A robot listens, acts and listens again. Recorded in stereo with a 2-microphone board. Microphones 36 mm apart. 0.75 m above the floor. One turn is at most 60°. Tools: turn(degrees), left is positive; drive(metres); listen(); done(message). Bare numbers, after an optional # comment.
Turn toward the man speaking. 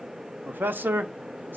# The man speaking: about 75° right or 105° right.
turn(-60)
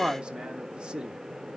# So it is at 25° right.
turn(-25)
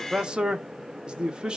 # The man speaking is now 25° right.
turn(-25)
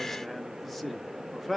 done("Found it: a man speaking, straight ahead, 1 to 2 m away.")